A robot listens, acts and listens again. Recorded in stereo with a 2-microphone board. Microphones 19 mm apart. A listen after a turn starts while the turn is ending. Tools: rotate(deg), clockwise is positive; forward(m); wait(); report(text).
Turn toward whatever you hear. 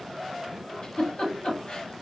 rotate(-65)
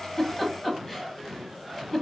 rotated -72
rotate(-10)
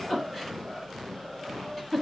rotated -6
report("Found it: a giggle, straight ahead.")